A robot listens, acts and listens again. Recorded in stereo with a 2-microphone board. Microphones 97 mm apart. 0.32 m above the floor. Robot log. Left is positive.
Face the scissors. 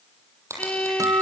note: The scissors: about 30° right or 150° right.
cmd yaw -30
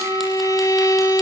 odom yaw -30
cmd idle
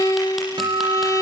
cmd idle
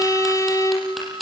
end: Facing the scissors, over 4 m away.